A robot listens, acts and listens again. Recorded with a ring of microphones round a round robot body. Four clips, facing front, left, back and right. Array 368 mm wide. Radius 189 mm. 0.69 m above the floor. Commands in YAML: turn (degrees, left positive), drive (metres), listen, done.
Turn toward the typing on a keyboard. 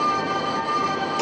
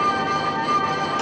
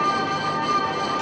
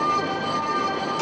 listen: true
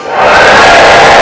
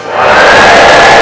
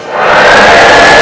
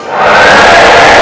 listen: true
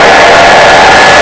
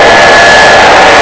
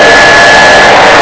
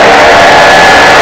done: "I can't make out typing on a keyboard, only a hair dryer."